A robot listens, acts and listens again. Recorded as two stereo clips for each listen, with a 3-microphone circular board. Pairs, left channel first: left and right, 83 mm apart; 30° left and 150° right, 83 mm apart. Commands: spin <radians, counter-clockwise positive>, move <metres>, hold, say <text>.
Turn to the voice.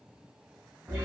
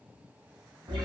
hold
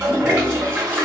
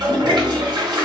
hold
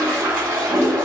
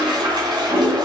say I can't make out anyone speaking, only a toilet flushing.